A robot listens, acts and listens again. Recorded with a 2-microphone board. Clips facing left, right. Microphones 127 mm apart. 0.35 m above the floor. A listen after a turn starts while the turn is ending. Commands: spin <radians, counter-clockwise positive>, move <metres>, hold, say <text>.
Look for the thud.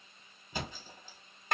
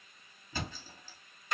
spin 0.35
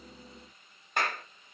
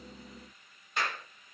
hold
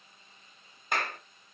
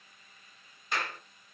say I heard a thud, but can't make it out now. It was about straight ahead or 140° left.